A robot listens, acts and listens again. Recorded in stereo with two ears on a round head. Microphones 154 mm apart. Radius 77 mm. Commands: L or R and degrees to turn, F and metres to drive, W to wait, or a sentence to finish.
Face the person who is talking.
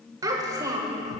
R20
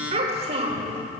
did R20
R140
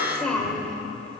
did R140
Facing the child speaking.